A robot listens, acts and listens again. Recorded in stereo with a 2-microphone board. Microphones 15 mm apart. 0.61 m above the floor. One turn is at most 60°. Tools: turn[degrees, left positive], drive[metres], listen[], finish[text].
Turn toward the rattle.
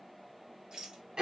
Thought: The rattle: about 55° right or 125° right.
Action: turn[-55]
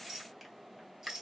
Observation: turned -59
Thought: So it is at 55° right.
Action: turn[-55]
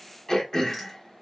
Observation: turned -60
Action: listen[]
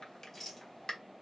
Action: finish[Found it: a rattle, straight ahead.]